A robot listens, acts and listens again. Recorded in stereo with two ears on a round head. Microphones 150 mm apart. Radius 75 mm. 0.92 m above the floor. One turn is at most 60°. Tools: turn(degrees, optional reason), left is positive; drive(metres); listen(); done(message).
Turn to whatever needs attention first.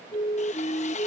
turn(degrees=35, reason="The siren: about 35° left or 145° left.")
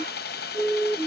done("Found it: a siren, straight ahead.")